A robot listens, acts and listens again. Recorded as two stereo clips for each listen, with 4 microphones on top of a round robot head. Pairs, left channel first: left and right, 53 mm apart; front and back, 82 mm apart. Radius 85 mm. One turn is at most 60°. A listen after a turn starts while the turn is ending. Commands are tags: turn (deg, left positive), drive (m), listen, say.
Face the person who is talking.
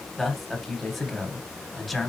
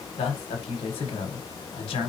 <say>Found it: a man speaking, straight ahead, 1 to 2 m away.</say>